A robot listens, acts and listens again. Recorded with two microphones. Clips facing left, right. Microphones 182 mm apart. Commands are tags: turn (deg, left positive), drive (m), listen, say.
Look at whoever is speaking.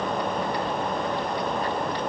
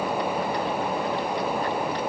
<listen/>
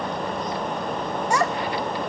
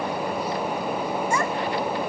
<turn deg="75"/>
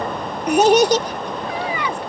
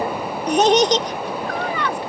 <turn deg="10"/>
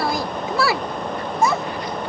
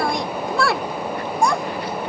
<say>Facing the child speaking.</say>